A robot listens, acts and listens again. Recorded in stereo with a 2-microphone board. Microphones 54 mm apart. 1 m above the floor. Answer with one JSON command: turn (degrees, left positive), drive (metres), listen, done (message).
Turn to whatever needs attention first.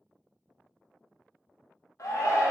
{"turn": 65}
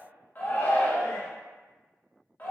{"turn": 35}
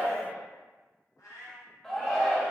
{"done": "Facing the shout, under 1 m away."}